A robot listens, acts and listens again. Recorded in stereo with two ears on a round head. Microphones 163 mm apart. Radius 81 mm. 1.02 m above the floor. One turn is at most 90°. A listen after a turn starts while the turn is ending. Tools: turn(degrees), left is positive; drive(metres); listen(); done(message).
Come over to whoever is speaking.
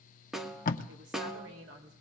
turn(degrees=-70)
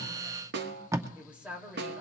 drive(metres=1.0)
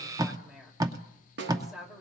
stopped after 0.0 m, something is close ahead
done("Blocked. The woman speaking is further on, straight ahead.")